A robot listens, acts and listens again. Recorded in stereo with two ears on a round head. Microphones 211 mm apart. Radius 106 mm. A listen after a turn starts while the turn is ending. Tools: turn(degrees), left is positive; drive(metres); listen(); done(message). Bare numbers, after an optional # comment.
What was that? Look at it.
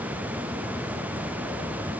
listen()
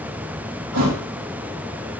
turn(-90)
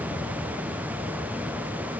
done("Facing where the thud came from. I can't hear it now.")